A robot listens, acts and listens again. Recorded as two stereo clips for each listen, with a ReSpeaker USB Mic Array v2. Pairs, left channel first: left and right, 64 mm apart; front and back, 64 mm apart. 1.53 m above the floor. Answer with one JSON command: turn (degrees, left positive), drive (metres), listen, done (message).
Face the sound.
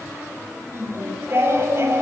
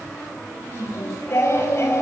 {"turn": -45}
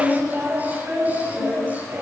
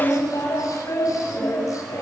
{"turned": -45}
{"turn": -25}
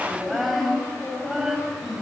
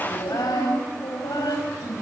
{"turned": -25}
{"done": "Facing the singing, over 4 m away."}